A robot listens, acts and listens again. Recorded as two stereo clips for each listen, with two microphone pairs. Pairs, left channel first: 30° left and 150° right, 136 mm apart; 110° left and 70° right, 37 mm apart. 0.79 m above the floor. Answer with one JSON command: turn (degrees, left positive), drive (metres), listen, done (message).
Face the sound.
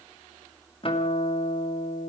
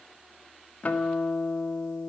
{"turn": 70}
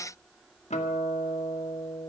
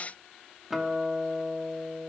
{"turn": 10}
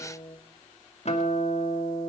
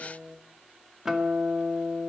{"done": "Found it: a guitar, straight ahead."}